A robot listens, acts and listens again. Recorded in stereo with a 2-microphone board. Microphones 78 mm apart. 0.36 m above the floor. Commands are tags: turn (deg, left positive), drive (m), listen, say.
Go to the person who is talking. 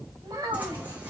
<turn deg="-55"/>
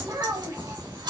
<turn deg="-60"/>
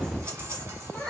<drive m="1.0"/>
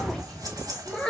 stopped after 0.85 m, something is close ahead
<turn deg="10"/>
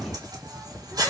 <listen/>
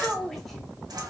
<say>Arrived at the child speaking, straight ahead.</say>